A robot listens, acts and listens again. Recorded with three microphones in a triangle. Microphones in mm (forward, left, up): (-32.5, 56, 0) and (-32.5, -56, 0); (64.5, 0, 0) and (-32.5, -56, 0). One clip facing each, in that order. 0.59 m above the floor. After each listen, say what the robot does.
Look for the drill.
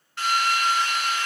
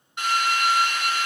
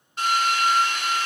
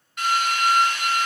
Turn 25° right.
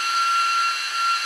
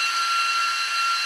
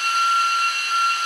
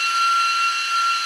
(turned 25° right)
Found it: a drill, straight ahead, 1 to 2 m away.